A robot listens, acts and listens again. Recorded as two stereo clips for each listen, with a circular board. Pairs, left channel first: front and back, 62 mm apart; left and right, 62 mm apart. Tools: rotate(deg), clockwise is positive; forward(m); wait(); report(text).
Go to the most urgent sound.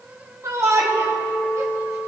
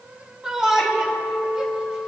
rotate(165)
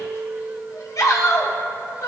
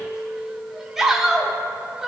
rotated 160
forward(1.0)
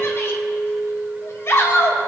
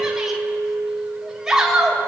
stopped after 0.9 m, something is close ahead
rotate(10)
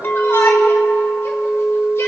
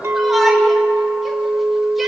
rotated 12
wait()
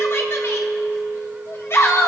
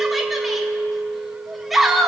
report("I am next to the shout.")